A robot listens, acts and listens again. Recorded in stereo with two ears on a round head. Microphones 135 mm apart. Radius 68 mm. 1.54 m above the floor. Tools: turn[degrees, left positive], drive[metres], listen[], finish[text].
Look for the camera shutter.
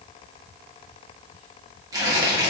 Action: listen[]
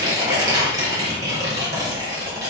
Action: listen[]
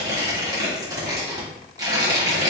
Action: finish[I can't make out a camera shutter to turn to.]